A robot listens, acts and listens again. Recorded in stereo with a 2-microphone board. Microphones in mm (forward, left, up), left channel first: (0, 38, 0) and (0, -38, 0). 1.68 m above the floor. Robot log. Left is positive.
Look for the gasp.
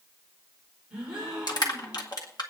cmd yaw -30
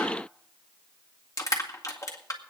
cmd idle
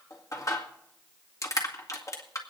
end: I heard a gasp, but can't make it out now. It was about 20° left or 140° right.